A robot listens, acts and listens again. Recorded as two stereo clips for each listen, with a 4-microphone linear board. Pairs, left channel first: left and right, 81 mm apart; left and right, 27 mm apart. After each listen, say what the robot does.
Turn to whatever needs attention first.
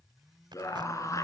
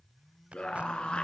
Turn 40° left.
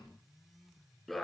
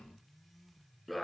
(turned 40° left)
Facing the scream.